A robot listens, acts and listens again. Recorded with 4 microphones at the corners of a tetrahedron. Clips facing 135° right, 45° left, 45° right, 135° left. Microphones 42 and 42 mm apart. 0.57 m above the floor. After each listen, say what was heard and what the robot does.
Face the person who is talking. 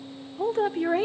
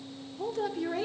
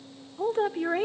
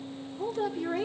The woman speaking: 90° right. Turn 90° right.
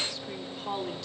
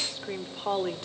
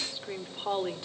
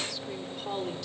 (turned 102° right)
The woman speaking is now 10° left. Turn 10° left.
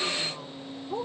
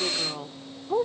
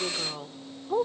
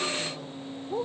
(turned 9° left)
Facing the woman speaking, 1 to 2 m away.